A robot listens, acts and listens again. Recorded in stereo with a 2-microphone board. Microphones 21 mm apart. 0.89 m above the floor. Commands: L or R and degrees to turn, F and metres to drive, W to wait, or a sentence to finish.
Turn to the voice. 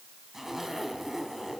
W
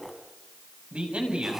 R70
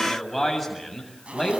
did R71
Facing the man speaking, over 4 m away.